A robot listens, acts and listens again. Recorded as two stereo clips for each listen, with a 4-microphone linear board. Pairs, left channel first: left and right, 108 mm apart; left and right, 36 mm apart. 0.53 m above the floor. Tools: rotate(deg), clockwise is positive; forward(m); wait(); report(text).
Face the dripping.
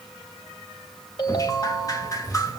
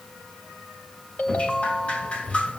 rotate(-35)
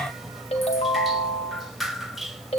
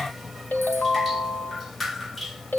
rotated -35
report("Facing the dripping, 1 to 2 m away.")